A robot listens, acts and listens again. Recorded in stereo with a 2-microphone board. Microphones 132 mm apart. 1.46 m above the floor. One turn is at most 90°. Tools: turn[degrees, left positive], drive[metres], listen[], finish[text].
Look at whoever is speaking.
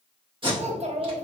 Thought: The child speaking: about 55° right or 125° right.
Action: turn[-55]
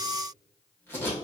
Action: listen[]
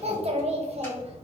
Thought: So it is at 60° right.
Action: turn[-60]
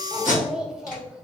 Action: finish[Found it: a child speaking, straight ahead, 1 to 2 m away.]